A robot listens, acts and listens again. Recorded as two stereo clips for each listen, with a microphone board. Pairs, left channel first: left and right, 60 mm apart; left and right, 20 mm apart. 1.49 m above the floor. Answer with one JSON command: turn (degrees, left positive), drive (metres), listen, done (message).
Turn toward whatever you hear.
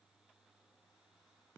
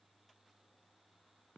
{"listen": true}
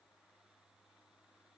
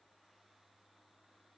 {"listen": true}
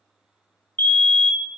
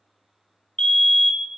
{"turn": 25}
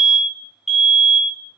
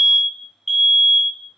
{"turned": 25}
{"done": "Found it: a fire alarm, straight ahead."}